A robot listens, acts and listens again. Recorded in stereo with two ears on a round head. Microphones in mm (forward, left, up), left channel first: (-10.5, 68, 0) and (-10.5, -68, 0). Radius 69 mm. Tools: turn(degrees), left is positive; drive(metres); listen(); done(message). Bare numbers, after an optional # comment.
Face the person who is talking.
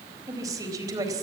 # The woman speaking: about 25° right or 155° right.
turn(-25)
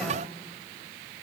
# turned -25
listen()
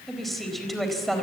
done("Facing the woman speaking.")